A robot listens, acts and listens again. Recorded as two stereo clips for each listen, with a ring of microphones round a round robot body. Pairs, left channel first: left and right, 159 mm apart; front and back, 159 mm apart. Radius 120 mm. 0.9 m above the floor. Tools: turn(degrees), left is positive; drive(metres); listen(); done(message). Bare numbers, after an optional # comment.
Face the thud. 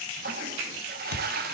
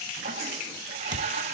# The thud: 115° left.
turn(115)
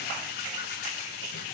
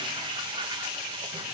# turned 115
done("Facing where the thud came from. I can't hear it now.")